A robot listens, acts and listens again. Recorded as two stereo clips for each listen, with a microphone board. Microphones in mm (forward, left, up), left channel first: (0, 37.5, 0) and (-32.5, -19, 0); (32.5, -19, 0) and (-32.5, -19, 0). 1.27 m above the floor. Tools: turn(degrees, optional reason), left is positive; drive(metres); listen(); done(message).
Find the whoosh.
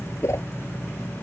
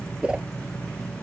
turn(degrees=105, reason="The whoosh: 105° left.")
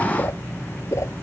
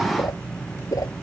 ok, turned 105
turn(degrees=25, reason="The whoosh is now 25° left.")
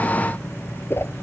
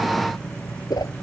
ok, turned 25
done("Found it: a whoosh, straight ahead.")